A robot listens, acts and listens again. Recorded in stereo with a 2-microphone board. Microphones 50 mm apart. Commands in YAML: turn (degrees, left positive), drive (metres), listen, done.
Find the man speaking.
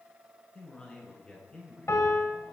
turn: 20
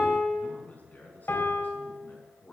turn: 35
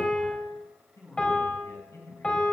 turn: 115
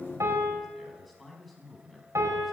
done: "Facing the man speaking."